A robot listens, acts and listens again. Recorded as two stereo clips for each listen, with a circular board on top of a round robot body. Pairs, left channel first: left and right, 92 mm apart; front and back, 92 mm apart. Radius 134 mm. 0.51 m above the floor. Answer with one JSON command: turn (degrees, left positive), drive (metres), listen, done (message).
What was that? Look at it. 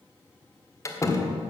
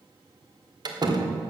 {"turn": 145}
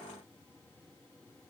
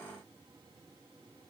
{"done": "I heard a door slam from this way, but can't make it out now."}